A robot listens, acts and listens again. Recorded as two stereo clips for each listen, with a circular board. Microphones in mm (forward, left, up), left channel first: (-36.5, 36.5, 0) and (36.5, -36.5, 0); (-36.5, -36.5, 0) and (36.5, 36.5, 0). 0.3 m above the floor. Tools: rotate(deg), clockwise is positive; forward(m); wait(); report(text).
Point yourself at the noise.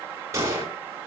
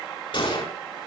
rotate(105)
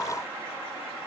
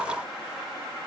report("Facing where the gunshot came from. I can't hear it now.")